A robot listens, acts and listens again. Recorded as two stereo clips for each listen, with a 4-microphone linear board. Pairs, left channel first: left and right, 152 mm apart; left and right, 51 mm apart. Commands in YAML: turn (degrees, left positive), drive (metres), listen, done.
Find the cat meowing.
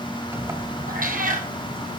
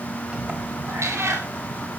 turn: -65
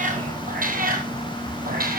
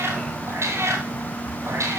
turn: -80
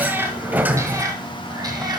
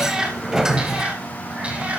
turn: -30
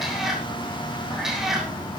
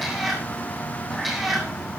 done: "Found it: a cat meowing, straight ahead, 2 to 4 m away."